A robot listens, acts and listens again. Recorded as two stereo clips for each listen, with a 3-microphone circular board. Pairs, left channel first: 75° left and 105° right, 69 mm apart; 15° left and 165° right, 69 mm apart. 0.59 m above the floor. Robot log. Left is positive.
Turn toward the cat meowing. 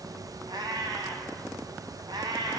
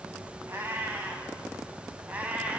note: The cat meowing: 95° right.
cmd yaw -95
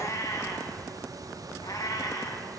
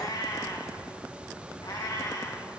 note: The cat meowing is now 45° left.
cmd yaw +45
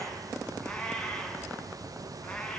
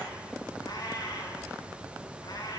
end: Facing the cat meowing, 2 to 4 m away.